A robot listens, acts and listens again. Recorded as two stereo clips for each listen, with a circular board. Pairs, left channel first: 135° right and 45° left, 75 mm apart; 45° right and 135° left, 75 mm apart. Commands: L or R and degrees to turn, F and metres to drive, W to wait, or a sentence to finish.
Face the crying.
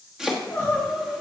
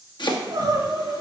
L170
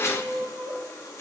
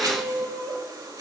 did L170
L20
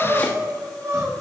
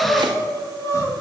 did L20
Found it: crying, straight ahead.